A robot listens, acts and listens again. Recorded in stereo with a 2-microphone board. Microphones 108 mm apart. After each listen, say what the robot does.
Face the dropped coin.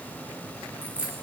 Turn 30° right.
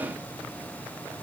Keep listening.
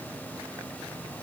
I heard a dropped coin, but can't make it out now. It was about 15° left or 135° right.